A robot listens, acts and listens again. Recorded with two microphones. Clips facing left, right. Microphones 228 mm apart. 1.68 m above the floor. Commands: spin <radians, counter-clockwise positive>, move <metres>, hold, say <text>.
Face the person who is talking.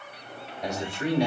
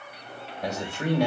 spin -0.96
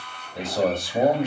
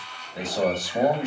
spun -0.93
say Facing the man speaking, 2 to 4 m away.